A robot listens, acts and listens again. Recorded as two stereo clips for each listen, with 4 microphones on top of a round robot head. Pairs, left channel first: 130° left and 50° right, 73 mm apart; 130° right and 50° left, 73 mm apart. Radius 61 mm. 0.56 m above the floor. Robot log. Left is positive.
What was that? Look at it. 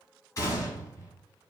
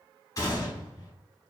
note: The gunshot: 175° right.
cmd yaw -175
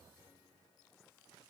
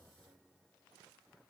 end: I heard a gunshot from this way, but can't make it out now.